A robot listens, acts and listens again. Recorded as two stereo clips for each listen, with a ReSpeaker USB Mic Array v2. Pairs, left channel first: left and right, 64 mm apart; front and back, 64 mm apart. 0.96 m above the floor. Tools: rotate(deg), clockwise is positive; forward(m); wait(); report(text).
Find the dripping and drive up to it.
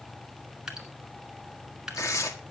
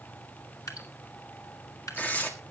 rotate(10)
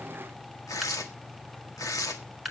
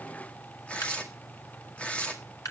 forward(1.0)
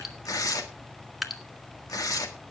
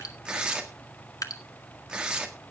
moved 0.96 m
forward(1.0)
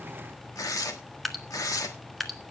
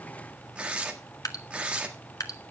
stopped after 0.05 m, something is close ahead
report("I am next to the dripping.")